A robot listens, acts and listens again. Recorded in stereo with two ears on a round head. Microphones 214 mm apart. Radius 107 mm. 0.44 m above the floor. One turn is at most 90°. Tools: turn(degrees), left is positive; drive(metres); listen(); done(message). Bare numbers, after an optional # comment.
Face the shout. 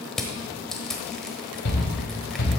# The shout: about 50° left or 130° left.
turn(50)
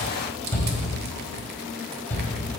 # So it is at 10° left.
turn(10)
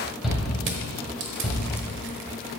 done("Found it: a shout, straight ahead.")